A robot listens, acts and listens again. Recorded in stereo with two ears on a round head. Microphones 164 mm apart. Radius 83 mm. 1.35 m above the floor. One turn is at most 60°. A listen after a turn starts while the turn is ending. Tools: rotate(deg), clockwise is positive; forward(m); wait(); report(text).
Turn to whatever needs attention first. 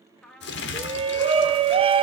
rotate(30)
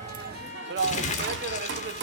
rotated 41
rotate(60)
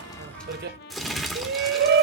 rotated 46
rotate(60)
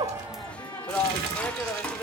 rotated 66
report("Found it: a shout, straight ahead, under 1 m away.")